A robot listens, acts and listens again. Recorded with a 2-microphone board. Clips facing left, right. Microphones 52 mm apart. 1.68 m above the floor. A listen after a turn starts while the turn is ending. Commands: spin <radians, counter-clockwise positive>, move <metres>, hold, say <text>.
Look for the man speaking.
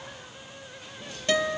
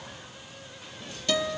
hold
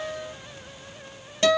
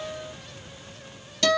hold
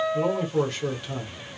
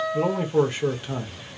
spin -0.26
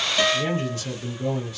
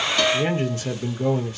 spin -2.53
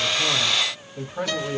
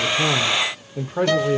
spin -0.79
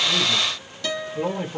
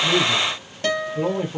say Facing the man speaking, 1 to 2 m away.